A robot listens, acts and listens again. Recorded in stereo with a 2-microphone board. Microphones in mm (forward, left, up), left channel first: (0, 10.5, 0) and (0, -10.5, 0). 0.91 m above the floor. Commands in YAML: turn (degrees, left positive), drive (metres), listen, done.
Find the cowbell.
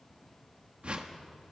listen: true
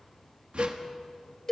turn: 25
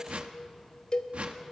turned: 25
turn: 135
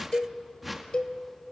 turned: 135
turn: 45
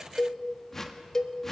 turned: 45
turn: 20
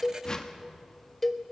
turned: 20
done: "Facing the cowbell."